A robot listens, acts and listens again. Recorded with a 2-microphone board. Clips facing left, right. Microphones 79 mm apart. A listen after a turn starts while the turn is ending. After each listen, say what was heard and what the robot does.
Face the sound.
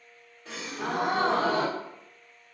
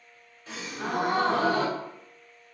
Turn 90° left.
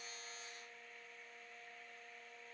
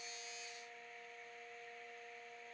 I heard a gasp from this way, but can't make it out now.